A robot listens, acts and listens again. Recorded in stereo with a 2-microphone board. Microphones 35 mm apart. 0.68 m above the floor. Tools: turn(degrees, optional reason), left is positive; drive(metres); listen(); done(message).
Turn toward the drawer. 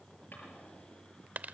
listen()
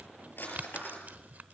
turn(degrees=90)
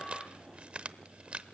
listen()
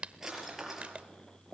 turn(degrees=-10, reason="The drawer is now 10° right.")
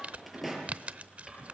done("Found it: a drawer, straight ahead.")